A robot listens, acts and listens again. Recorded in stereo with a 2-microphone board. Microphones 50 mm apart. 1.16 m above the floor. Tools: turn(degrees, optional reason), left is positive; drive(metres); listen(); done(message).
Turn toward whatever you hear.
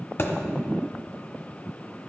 turn(degrees=50, reason="The thud: about 50° left or 130° left.")
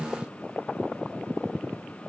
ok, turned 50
listen()
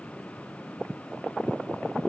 done("I heard a thud, but can't make it out now. It was about straight ahead or 80° left.")